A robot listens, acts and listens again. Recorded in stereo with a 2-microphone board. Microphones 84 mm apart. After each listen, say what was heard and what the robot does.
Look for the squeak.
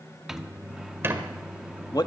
The squeak: about 30° right or 150° right. Turn 30° right.
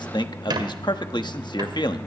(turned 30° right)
So it is at 120° right. Turn 120° right.
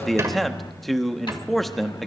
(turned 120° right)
The squeak is now 40° right. Turn 40° right.
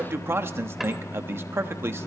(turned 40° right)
Keep listening.
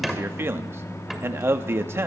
Facing the squeak, 1 to 2 m away.